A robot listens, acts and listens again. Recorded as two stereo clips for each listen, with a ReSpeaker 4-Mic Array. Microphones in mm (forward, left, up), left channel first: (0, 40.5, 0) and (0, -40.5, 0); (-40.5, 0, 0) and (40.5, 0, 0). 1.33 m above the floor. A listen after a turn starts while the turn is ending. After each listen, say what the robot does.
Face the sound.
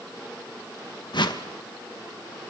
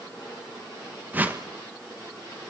Turn 70° left.
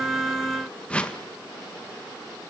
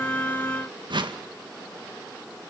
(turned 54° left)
Turn 15° left.
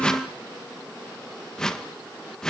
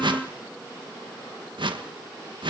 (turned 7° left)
Found it: a whoosh, straight ahead, 1 to 2 m away.